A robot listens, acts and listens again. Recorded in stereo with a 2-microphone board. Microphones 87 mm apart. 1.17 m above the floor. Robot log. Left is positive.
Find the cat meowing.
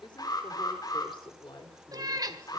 note: The cat meowing: about 45° right or 135° right.
cmd yaw -45
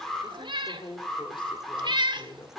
note: So it is at 80° right.
cmd yaw -80
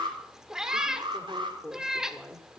note: The cat meowing is now 10° right.
cmd yaw -10
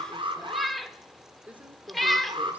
end: Found it: a cat meowing, straight ahead, 1 to 2 m away.